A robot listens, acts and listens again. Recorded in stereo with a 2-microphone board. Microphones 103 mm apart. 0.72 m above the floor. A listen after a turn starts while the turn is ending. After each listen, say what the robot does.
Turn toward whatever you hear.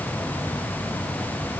Keep listening.
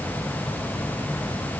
Keep listening.
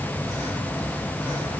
I can't make out anything to turn to.